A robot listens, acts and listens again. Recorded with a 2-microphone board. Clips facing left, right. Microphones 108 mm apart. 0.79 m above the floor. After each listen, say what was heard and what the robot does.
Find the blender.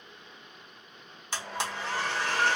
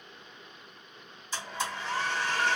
The blender: about 75° left or 105° left. Turn 75° left.
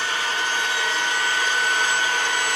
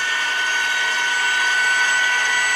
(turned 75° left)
So it is at 25° left. Turn 25° left.
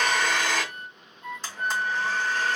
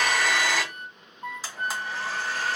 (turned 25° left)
Found it: a blender, straight ahead.